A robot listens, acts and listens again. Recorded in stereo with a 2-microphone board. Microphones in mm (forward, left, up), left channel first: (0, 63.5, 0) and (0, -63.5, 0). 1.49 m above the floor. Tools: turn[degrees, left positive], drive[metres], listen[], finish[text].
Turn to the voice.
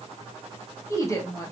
Thought: The woman speaking: about 25° left or 155° left.
Action: turn[25]
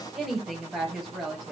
Action: finish[Facing the woman speaking, 1 to 2 m away.]